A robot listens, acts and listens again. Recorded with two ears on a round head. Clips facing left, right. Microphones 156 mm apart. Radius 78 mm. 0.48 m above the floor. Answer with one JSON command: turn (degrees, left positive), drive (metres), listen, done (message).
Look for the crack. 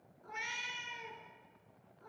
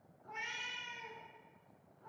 {"listen": true}
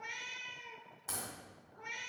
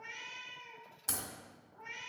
{"turn": -45}
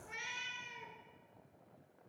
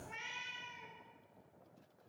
{"listen": true}
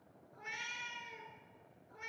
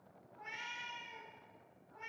{"done": "I heard a crack, but can't make it out now. It was about straight ahead or 90° right."}